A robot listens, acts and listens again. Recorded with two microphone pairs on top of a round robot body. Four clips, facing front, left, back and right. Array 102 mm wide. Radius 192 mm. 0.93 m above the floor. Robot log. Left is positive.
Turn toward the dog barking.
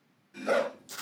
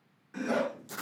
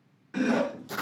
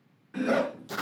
note: The dog barking: 20° right.
cmd yaw -20
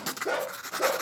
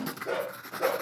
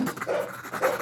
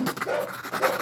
end: Facing the dog barking, over 4 m away.